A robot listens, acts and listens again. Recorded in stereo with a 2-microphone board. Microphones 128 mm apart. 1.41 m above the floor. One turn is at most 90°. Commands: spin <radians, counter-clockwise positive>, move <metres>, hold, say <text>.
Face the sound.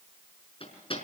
spin 0.79
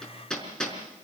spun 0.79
say Facing the hammering.